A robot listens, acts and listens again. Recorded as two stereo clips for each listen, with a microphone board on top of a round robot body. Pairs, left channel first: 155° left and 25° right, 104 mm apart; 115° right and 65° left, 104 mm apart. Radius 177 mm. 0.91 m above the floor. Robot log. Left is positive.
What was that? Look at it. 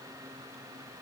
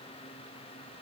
cmd idle
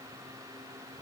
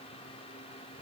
cmd idle
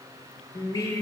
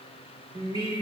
note: The singing: 105° left.
cmd yaw +105
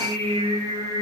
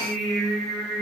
note: The singing is now 25° right.
cmd yaw -25
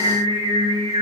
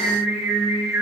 end: Facing the singing, over 4 m away.